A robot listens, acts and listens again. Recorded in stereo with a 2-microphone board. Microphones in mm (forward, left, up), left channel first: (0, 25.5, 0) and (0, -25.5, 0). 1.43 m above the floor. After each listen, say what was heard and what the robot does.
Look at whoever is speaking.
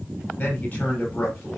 The man speaking: about 25° left or 155° left. Turn 25° left.
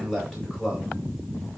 Facing the man speaking.